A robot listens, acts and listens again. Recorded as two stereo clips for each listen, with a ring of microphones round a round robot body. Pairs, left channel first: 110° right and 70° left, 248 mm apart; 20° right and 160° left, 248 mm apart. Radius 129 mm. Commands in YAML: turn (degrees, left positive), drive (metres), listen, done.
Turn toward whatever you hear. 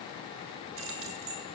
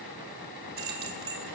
turn: 105
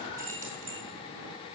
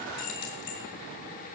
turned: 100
turn: 10
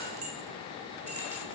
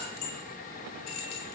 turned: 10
done: "Found it: keys jangling, straight ahead."